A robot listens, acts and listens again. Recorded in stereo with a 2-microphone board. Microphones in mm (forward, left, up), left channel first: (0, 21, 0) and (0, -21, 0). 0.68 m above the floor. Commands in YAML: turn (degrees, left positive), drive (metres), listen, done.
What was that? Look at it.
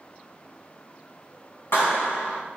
turn: 70
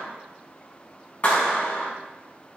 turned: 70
turn: 35
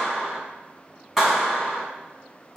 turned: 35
turn: -10
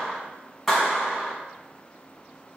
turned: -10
done: "Found it: a clap, straight ahead."